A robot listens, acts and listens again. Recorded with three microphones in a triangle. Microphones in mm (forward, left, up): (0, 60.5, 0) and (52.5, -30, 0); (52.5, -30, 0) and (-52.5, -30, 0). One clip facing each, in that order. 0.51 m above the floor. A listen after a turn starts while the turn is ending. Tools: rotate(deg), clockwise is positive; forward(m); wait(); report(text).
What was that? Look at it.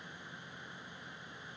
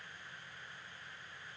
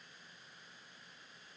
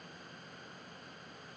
wait()
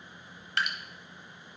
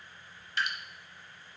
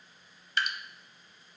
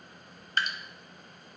rotate(-135)
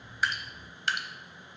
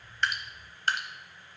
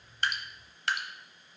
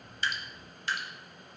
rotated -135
rotate(10)
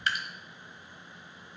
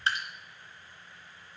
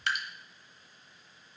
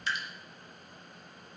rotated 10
report("Found it: dripping, straight ahead, 1 to 2 m away.")